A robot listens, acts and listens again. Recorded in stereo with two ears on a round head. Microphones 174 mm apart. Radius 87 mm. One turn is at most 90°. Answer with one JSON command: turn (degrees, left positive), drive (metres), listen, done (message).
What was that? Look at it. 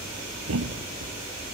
{"turn": -90}
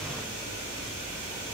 {"done": "Facing where the thud came from. I can't hear it now."}